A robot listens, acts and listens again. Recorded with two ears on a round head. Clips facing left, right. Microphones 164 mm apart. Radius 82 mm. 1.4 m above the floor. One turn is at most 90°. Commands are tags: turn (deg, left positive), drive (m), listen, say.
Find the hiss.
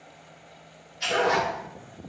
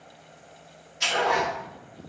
<turn deg="-65"/>
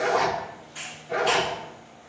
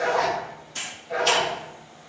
<turn deg="-50"/>
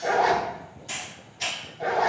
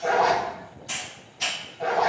<say>Found it: a hiss, straight ahead, 2 to 4 m away.</say>